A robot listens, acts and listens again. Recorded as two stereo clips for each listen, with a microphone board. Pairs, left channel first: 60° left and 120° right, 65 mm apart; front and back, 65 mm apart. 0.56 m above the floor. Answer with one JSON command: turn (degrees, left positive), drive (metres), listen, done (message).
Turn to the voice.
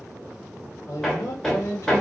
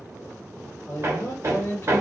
{"turn": 35}
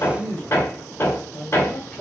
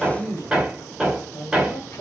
{"done": "Found it: a man speaking, straight ahead."}